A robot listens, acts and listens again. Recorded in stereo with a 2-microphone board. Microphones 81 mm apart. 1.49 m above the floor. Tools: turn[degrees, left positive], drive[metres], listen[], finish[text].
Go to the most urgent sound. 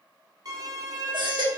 Action: turn[-90]
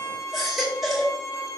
Action: drive[1.0]
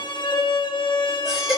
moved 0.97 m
Action: drive[1.0]
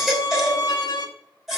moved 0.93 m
Action: drive[1.0]
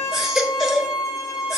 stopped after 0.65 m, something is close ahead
Action: finish[Arrived at the baby crying, straight ahead.]